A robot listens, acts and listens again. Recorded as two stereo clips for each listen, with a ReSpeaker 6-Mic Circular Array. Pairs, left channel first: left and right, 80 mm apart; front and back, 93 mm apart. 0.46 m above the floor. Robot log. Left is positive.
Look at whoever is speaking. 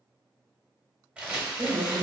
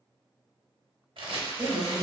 note: The woman speaking: 115° right.
cmd yaw -115
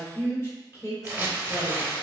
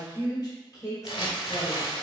note: The woman speaking is now 45° left.
cmd yaw +45
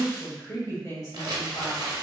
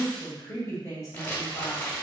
note: The woman speaking is now 45° left.
cmd yaw +45
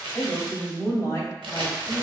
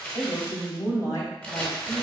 note: The woman speaking is now 40° left.
cmd yaw +40
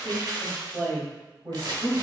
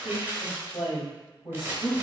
end: Found it: a woman speaking, straight ahead.